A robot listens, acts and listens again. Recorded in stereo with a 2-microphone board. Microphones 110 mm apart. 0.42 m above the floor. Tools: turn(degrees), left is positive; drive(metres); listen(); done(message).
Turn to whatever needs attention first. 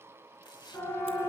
turn(degrees=25)
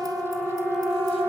done("Facing the siren.")